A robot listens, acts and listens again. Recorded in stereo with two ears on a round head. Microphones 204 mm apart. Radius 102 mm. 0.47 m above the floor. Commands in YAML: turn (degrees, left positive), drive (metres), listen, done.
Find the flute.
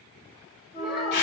turn: 30
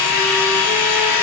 listen: true
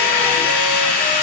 listen: true
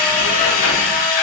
done: "I heard a flute, but can't make it out now. It was about straight ahead or 120° left."